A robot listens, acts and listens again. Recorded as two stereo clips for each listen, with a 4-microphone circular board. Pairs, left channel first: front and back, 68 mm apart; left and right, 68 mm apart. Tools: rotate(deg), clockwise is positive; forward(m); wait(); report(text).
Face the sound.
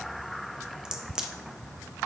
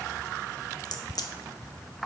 rotate(-100)
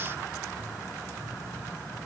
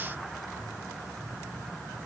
report("I heard a crack from this way, but can't make it out now.")